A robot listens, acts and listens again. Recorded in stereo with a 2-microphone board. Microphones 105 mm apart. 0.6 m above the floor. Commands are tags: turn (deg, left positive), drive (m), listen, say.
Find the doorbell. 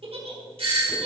<turn deg="-60"/>
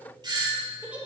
<turn deg="-50"/>
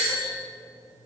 <turn deg="-10"/>
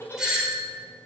<say>Found it: a doorbell, straight ahead, 2 to 4 m away.</say>